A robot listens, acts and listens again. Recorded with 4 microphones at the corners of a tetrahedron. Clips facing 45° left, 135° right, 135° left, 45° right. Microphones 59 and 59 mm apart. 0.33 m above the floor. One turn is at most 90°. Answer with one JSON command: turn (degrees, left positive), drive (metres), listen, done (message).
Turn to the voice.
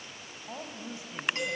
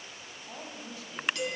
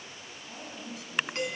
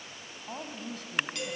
{"turn": -20}
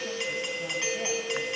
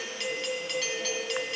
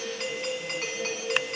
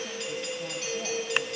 {"listen": true}
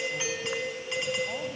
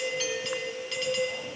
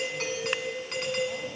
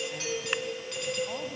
{"listen": true}
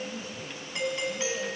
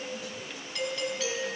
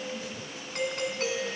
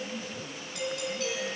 {"done": "Found it: a woman speaking, straight ahead."}